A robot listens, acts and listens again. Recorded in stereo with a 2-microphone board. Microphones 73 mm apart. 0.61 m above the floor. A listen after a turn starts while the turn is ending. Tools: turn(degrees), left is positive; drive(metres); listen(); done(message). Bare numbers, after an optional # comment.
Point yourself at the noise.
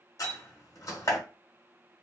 # The door slam: about 50° left or 130° left.
turn(50)
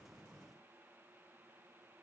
listen()
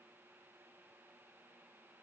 done("I heard a door slam, but can't make it out now. It was about straight ahead or 80° left.")